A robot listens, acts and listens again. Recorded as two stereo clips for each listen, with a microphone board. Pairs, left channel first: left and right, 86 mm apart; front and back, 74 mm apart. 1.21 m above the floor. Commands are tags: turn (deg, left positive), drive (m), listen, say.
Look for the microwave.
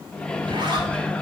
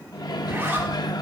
<turn deg="15"/>
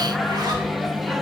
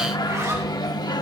<say>Found it: a microwave, straight ahead.</say>